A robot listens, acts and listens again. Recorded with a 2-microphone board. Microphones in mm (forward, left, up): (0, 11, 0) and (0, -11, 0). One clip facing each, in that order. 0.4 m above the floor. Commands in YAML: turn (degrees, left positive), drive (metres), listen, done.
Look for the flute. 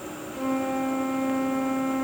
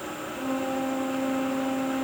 turn: 60
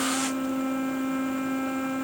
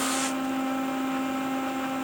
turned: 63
done: "Found it: a flute, straight ahead, 2 to 4 m away."